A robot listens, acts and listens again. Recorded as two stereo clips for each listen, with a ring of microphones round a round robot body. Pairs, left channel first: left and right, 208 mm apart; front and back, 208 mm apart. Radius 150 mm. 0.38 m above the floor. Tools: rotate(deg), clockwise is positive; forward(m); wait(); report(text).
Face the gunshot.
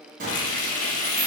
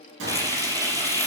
rotate(150)
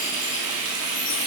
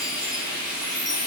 report("Facing where the gunshot came from. I can't hear it now.")